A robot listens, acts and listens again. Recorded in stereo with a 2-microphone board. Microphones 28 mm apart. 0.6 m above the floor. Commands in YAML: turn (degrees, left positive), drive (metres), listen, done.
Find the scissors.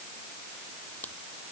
turn: 90
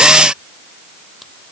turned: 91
listen: true
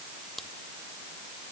turn: 10
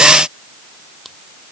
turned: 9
done: "Facing the scissors."